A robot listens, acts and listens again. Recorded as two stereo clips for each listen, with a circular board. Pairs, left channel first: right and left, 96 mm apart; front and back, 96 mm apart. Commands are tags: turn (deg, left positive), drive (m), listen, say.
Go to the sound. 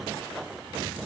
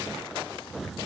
<listen/>
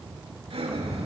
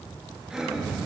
<turn deg="100"/>
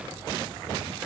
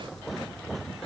<listen/>
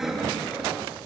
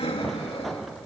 <drive m="1.0"/>
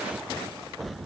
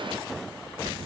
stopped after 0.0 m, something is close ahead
<listen/>
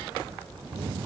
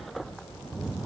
<listen/>
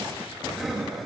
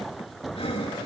<say>Something is in my way. I am facing the breathing but have not reached it.</say>